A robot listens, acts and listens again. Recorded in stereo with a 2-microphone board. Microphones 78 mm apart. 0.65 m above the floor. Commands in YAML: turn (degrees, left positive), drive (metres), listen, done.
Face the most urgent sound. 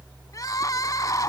turn: 45
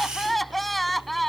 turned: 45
done: "Found it: crying, straight ahead."